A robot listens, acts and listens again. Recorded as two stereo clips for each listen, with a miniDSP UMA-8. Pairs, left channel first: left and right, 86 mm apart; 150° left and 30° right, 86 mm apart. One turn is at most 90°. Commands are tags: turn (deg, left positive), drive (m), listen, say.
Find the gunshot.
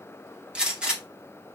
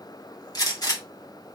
<turn deg="-90"/>
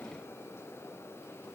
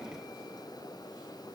<turn deg="-80"/>
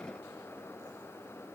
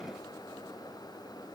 <say>I heard a gunshot from this way, but can't make it out now.</say>